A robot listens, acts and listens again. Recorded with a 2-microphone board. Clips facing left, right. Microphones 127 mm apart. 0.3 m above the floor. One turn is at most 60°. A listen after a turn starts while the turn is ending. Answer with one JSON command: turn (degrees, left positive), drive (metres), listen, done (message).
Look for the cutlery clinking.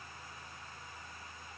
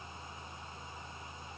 {"listen": true}
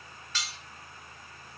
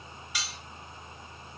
{"turn": -30}
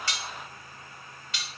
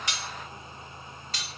{"turn": -60}
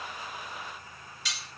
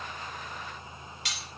{"turn": -60}
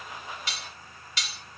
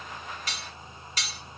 {"turn": -50}
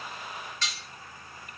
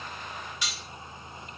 {"turn": -15}
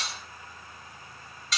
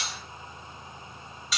{"done": "Facing the cutlery clinking, 1 to 2 m away."}